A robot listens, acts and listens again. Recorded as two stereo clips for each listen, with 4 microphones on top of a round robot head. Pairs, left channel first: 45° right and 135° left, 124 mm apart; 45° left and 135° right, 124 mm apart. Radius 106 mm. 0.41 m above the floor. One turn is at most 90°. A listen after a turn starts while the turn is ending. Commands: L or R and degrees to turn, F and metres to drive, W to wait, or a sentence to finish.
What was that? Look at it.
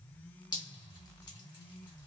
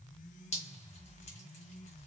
L10
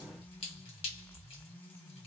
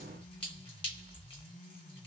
Found it: dripping, straight ahead, 1 to 2 m away.